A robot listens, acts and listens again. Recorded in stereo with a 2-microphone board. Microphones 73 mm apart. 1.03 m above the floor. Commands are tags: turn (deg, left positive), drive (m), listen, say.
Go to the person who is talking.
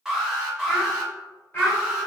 <turn deg="25"/>
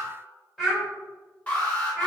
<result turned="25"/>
<drive m="1.0"/>
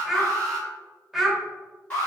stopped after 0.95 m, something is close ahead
<say>I am next to the child speaking.</say>